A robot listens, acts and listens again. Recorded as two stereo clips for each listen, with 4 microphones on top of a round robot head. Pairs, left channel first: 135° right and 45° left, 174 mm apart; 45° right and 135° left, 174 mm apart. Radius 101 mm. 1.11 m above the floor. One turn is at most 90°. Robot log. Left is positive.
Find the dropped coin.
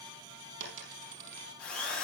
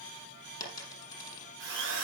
note: The dropped coin: 25° left.
cmd yaw +25
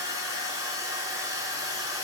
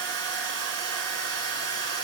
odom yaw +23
end: I heard a dropped coin from this way, but can't make it out now.